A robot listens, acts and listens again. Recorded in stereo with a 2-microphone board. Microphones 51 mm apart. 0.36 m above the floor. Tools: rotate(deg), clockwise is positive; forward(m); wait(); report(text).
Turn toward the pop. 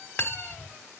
wait()
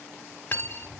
wait()
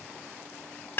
report("I can't make out a pop, only cutlery clinking.")